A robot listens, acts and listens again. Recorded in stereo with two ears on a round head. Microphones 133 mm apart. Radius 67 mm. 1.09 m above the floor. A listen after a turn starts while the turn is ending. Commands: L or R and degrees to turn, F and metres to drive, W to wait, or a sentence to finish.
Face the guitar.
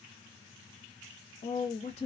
W
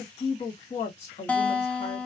L30
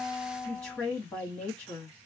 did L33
L135
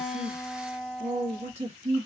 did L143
Facing the guitar.